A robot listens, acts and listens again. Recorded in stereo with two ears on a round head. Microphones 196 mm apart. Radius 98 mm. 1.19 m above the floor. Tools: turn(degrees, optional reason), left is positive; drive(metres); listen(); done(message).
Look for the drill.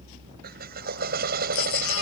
turn(degrees=-45, reason="The drill: about 45° right or 135° right.")
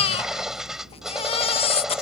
done("Found it: a drill, straight ahead.")